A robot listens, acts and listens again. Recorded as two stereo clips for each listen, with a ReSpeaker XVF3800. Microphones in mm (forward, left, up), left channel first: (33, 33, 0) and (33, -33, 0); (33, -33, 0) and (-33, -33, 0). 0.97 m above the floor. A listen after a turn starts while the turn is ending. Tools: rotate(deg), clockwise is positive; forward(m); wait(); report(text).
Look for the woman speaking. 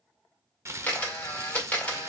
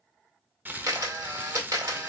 wait()
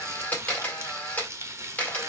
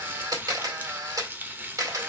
wait()
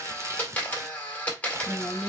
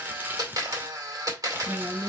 rotate(-155)
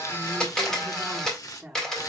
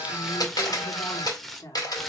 report("Facing the woman speaking, 1 to 2 m away.")